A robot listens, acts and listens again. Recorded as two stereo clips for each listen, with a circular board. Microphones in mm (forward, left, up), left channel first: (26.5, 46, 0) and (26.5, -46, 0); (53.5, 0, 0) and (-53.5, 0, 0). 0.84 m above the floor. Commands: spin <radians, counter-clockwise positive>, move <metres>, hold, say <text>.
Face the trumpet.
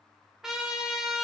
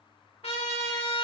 say Found it: a trumpet, straight ahead.